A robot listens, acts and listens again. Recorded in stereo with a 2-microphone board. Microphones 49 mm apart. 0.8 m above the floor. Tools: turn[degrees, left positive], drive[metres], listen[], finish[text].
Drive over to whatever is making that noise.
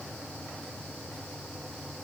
Action: listen[]
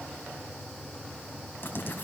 Thought: The writing: about 50° left or 130° left.
Action: turn[50]
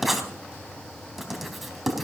Action: drive[1.0]
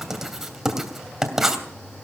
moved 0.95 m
Thought: The writing is now 10° right.
Action: turn[-10]
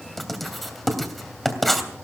Action: drive[1.0]
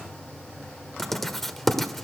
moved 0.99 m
Action: drive[1.0]
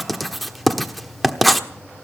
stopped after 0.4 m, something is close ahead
Action: finish[Arrived at the writing, straight ahead.]